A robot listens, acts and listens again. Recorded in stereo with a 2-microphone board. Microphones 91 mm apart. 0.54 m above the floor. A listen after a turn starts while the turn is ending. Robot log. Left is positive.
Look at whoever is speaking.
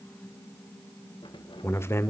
note: The man speaking: about 30° left or 150° left.
cmd yaw +30
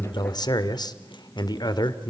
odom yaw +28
note: So it is at 120° left.
cmd yaw +120
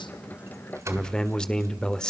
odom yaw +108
note: The man speaking is now 10° left.
cmd yaw +10
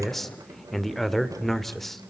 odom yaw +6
end: Facing the man speaking, 1 to 2 m away.